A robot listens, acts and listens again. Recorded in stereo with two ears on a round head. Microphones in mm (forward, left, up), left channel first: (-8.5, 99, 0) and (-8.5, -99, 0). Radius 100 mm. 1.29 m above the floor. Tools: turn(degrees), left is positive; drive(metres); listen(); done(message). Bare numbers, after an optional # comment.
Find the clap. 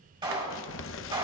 # The clap: about 25° right or 155° right.
turn(-25)
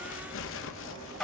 done("Found it: a clap, straight ahead, 2 to 4 m away.")